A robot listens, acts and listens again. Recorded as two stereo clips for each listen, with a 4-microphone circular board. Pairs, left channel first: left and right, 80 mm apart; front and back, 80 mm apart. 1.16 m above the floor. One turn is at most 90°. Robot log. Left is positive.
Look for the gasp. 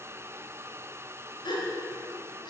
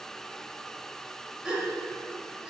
note: The gasp: 100° left.
cmd yaw +90
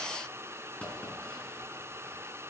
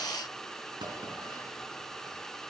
note: Nothing new. It was at 10° left.
cmd yaw +10
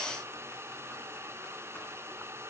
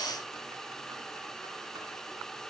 end: Facing where the gasp came from. I can't hear it now.